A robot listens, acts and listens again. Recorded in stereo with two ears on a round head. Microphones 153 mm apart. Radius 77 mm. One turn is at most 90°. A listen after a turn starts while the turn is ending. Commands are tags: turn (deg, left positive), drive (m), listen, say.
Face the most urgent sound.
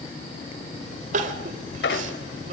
<turn deg="-45"/>
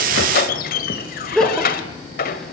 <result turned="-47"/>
<say>Found it: crying, straight ahead, 2 to 4 m away.</say>